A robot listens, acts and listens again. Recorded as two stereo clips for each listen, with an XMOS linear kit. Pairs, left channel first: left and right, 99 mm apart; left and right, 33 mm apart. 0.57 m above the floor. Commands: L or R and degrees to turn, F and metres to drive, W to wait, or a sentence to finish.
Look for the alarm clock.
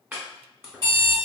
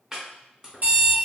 R50
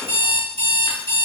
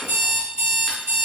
R80
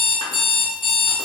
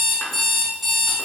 Facing the alarm clock.